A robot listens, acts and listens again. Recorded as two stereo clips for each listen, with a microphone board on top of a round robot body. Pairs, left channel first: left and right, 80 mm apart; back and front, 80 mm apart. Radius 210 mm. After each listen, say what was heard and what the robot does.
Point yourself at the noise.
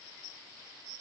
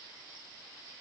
Keep listening.
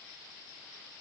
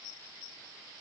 Keep listening.
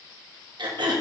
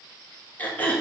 The throat clearing: 110° right. Turn 110° right.
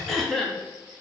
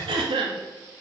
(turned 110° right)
Found it: throat clearing, straight ahead, 1 to 2 m away.